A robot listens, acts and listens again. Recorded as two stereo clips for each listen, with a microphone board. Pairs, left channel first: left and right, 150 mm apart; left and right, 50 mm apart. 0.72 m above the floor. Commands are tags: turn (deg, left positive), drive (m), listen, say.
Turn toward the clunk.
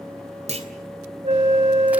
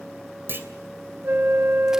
<turn deg="-45"/>
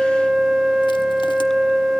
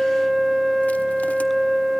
<listen/>
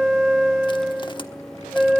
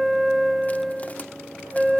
<say>I heard a clunk, but can't make it out now. It was about straight ahead or 90° right.</say>